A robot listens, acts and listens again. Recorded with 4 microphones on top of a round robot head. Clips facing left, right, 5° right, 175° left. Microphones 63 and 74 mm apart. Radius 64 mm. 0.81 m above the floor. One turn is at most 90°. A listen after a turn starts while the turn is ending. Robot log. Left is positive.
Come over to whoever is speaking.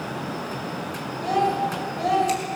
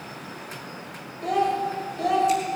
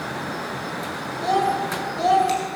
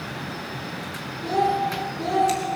cmd fwd 1.0
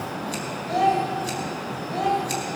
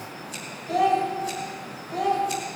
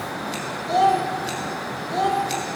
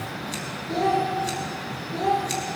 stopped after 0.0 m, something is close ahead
end: Something is in my way. I am facing the child speaking but have not reached it.